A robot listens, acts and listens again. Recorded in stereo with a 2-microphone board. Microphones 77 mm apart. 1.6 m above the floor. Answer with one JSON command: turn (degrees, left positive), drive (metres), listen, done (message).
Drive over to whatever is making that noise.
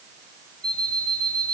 {"turn": -75}
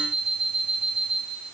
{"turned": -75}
{"drive": 1.0}
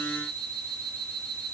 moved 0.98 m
{"drive": 1.0}
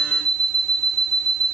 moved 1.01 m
{"turn": 10}
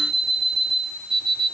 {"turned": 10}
{"drive": 1.0}
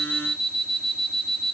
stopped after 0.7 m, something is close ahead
{"done": "Arrived at the alarm clock, straight ahead."}